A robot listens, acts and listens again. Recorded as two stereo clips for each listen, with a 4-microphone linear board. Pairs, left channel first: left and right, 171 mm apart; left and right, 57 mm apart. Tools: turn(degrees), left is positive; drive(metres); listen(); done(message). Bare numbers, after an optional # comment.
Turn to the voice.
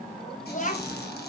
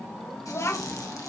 # The child speaking: about 50° left or 130° left.
turn(50)
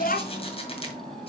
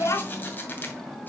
# So it is at 70° left.
turn(70)
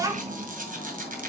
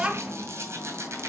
# The child speaking is now 20° right.
turn(-20)
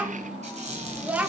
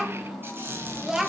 # The child speaking is now 10° right.
turn(-10)
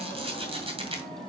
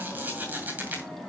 listen()
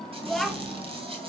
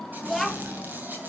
done("Facing the child speaking, 1 to 2 m away.")